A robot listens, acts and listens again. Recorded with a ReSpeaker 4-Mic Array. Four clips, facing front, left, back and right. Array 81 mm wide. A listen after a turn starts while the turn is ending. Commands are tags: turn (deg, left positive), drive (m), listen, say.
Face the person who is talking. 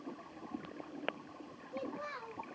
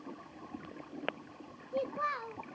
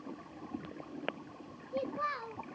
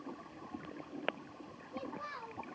<turn deg="115"/>
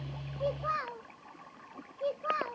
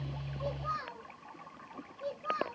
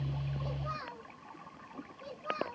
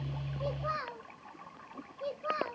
<turn deg="-20"/>
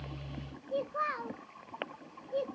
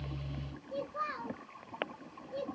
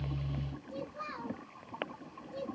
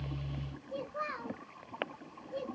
<say>Facing the child speaking.</say>